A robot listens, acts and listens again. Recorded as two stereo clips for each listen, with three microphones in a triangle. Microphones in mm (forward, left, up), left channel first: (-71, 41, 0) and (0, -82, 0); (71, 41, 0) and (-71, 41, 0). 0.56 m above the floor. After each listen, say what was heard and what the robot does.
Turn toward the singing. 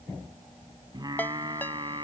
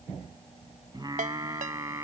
The singing: 115° right. Turn 115° right.
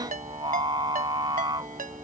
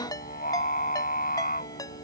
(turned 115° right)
Facing the singing.